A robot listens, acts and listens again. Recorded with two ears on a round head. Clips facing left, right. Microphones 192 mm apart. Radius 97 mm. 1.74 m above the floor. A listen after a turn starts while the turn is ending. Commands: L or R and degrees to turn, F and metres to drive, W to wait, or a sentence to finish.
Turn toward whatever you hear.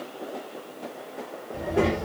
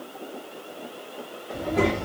L30
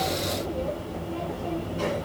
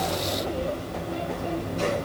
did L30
R25
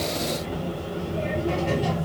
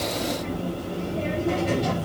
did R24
Facing the child speaking, 2 to 4 m away.